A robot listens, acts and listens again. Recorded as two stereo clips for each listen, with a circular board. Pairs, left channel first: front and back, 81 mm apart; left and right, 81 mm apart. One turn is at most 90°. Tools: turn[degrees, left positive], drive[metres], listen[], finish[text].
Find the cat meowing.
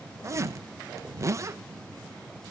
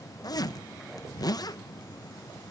Action: listen[]
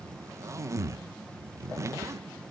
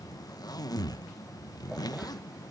Action: listen[]
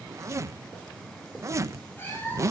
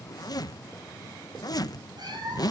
Thought: The cat meowing: 60° right.
Action: turn[-60]
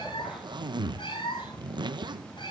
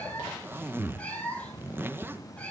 Thought: The cat meowing is now 15° left.
Action: turn[15]
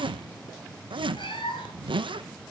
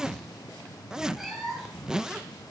Action: finish[Found it: a cat meowing, straight ahead, over 4 m away.]